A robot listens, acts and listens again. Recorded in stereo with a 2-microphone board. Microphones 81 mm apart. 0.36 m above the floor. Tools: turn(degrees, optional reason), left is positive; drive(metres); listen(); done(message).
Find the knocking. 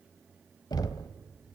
turn(degrees=55, reason="The knocking: about 55° left or 125° left.")
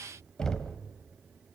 turn(degrees=10, reason="So it is at 10° left.")
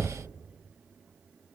done("Found it: knocking, straight ahead.")